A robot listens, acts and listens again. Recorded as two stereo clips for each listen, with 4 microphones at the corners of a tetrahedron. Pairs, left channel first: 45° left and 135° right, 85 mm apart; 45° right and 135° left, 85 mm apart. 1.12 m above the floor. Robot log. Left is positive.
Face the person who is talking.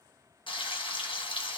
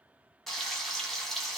cmd idle
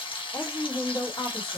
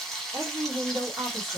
note: The woman speaking: 90° left.
cmd yaw +90
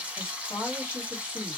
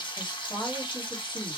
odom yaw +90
note: The woman speaking is now 10° right.
cmd yaw -10
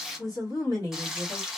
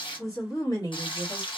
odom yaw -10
end: Found it: a woman speaking, straight ahead.